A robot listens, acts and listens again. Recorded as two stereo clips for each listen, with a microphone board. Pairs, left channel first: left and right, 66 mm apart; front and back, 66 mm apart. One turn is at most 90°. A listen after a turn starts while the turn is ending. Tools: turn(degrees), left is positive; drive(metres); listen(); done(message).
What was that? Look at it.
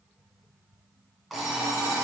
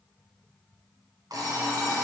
turn(degrees=-90)
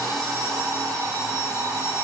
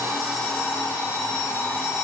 turn(degrees=-65)
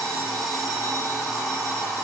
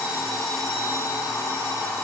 done("Facing the alarm clock.")